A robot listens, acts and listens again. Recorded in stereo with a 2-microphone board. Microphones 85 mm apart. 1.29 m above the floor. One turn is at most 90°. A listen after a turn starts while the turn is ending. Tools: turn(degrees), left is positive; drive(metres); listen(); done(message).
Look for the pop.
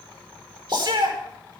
turn(degrees=-50)
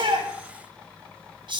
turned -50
listen()
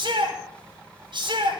done("I heard a pop, but can't make it out now. It was about straight ahead or 80° right.")